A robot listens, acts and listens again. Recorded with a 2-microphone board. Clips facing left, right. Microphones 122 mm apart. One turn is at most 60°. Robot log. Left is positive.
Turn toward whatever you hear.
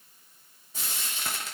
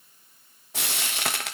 note: The frying: about 75° right or 105° right.
cmd yaw -60
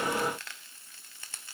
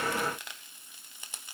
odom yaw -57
note: So it is at 15° right.
cmd yaw -15
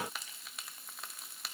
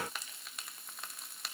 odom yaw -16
end: Facing the frying, under 1 m away.